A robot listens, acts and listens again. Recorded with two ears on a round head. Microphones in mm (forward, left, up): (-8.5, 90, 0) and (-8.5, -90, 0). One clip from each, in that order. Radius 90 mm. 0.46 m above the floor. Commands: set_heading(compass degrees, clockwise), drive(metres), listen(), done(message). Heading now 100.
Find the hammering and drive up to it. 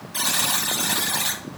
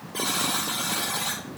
listen()
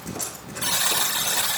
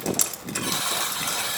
listen()
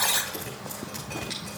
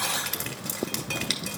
done("I can't make out hammering to turn to.")